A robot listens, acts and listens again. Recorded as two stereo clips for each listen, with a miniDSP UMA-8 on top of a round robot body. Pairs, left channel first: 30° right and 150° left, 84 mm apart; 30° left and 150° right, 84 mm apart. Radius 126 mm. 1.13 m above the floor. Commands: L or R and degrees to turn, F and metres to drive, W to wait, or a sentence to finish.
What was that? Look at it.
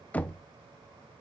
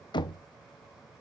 L40
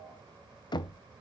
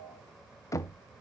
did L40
R20
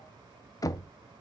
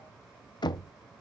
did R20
Found it: knocking, straight ahead.